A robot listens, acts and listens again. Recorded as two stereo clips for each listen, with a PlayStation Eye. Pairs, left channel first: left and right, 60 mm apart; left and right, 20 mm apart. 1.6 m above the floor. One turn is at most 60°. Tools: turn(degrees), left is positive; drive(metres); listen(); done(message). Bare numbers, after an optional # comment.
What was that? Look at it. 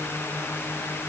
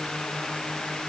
listen()
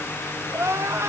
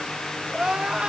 # The crying: about 55° right or 125° right.
turn(-55)
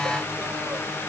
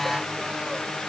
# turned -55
listen()
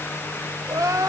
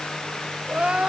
# So it is at 75° right.
turn(-60)
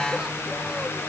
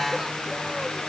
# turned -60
# Nothing new. It was at 15° right.
turn(-15)
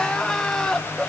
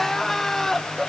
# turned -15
# The crying is now 15° left.
turn(15)
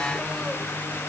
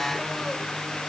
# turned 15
listen()
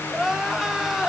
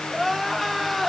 done("Facing the crying, 1 to 2 m away.")